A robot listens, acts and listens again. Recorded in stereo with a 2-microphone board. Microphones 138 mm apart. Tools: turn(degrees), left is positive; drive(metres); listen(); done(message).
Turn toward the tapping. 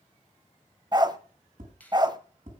turn(degrees=-75)
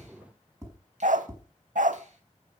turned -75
turn(degrees=-25)
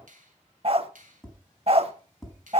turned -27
done("Facing the tapping.")